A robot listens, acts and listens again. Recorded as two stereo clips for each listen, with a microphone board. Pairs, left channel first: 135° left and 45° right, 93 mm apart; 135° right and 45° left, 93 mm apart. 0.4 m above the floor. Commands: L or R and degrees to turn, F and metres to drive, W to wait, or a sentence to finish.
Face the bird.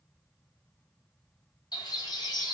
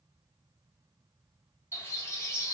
L170
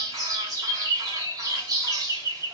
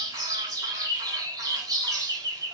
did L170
Found it: a bird, straight ahead.